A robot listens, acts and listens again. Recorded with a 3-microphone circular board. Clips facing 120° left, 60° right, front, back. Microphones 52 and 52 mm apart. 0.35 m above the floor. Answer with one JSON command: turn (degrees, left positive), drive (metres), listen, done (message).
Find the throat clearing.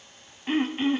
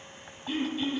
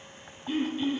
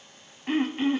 {"turn": 160}
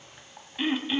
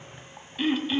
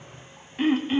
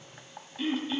{"turn": 40}
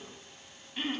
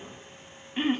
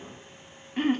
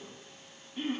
{"done": "Facing the throat clearing."}